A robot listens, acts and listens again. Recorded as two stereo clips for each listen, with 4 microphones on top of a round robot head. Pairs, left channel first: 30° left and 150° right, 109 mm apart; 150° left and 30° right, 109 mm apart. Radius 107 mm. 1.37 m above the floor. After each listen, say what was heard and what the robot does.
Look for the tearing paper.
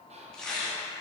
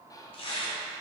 The tearing paper: 115° left. Turn 115° left.
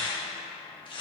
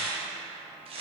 Facing the tearing paper.